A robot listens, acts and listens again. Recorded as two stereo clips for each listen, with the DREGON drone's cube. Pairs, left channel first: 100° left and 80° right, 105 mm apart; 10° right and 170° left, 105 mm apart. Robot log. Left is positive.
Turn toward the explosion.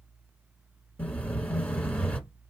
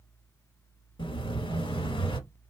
note: The explosion: 25° left.
cmd yaw +25
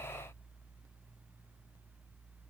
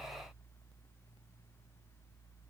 end: I heard an explosion from this way, but can't make it out now.